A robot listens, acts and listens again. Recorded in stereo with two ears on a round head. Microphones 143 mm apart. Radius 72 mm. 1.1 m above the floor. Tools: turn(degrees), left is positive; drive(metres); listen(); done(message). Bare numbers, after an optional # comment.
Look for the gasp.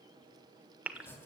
turn(-30)
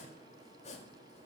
listen()
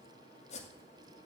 done("I heard a gasp, but can't make it out now. It was about 20° left or 140° right.")